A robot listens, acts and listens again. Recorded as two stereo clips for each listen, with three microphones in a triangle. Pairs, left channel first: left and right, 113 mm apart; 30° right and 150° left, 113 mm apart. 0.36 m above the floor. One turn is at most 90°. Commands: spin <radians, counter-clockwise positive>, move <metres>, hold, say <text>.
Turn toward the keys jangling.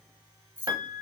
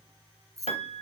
spin -1.57
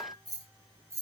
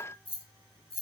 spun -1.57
spin -0.52
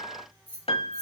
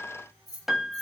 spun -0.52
spin 0.35
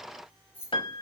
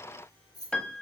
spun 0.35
spin 0.35
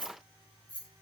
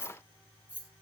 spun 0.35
spin 0.26
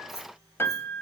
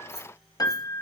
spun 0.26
say Found it: keys jangling, straight ahead, 2 to 4 m away.